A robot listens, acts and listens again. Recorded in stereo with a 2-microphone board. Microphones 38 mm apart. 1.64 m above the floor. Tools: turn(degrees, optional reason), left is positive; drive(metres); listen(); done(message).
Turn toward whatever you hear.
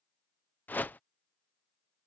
turn(degrees=55, reason="The whoosh: about 55° left or 125° left.")
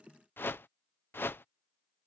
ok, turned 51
turn(degrees=75, reason="So it is at 75° left.")
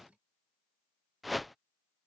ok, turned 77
done("Found it: a whoosh, straight ahead.")